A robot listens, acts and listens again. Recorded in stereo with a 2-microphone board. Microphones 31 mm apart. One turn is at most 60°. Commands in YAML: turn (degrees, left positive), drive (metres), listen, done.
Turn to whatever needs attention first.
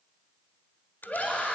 turn: 55
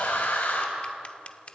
turn: 60
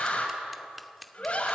turn: 35
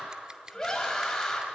turn: 10
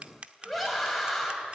done: "Found it: a scream, straight ahead, over 4 m away."